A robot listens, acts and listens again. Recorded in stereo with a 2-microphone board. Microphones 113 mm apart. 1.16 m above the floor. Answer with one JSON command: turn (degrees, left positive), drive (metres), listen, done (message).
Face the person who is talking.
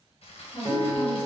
{"turn": 50}
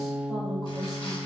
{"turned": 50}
{"done": "Found it: a woman speaking, straight ahead."}